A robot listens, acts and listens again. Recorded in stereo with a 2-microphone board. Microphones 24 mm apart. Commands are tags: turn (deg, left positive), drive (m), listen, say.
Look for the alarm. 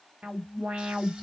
<turn deg="-75"/>
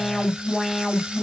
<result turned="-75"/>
<say>Found it: an alarm, straight ahead, 1 to 2 m away.</say>